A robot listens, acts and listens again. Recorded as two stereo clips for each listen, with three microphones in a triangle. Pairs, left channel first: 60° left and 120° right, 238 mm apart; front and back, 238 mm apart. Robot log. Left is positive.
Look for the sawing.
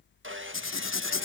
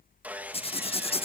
note: The sawing: 100° right.
cmd yaw -100
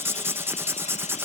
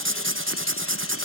cmd idle
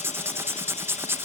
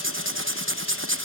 cmd idle
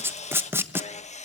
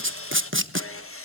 end: Facing the sawing, 1 to 2 m away.